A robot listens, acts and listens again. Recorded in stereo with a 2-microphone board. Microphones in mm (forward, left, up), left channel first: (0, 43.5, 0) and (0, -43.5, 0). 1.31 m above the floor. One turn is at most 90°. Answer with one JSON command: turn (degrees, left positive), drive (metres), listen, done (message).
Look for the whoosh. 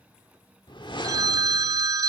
{"turn": 65}
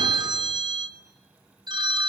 {"listen": true}
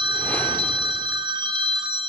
{"listen": true}
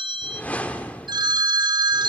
{"turn": 20}
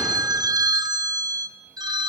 {"listen": true}
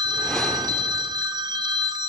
{"listen": true}
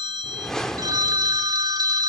{"done": "Found it: a whoosh, straight ahead, 1 to 2 m away."}